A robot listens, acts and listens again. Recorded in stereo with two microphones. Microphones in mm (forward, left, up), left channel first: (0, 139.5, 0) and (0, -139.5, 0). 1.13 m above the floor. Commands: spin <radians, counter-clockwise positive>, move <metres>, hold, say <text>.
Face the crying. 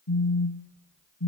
hold
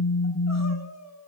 spin 1.22
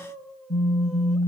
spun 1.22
say Facing the crying, 1 to 2 m away.